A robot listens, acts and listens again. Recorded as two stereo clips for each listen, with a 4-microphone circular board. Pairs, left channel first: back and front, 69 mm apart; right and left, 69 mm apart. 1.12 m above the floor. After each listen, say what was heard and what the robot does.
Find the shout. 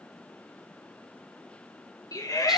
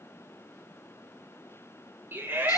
The shout: 150° left. Turn 150° left.
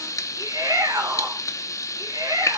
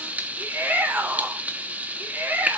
The shout is now 25° left. Turn 25° left.
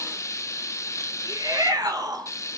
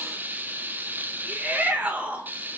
The shout is now 20° left. Turn 20° left.
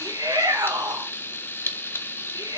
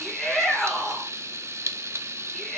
Facing the shout, 2 to 4 m away.